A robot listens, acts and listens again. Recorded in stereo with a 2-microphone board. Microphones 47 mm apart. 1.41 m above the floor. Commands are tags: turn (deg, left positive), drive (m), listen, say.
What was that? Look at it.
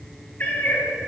<turn deg="45"/>
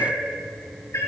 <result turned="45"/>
<turn deg="80"/>
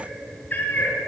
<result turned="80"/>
<turn deg="40"/>
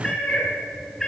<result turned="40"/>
<turn deg="10"/>
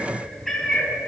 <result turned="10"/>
<say>Facing the cat meowing.</say>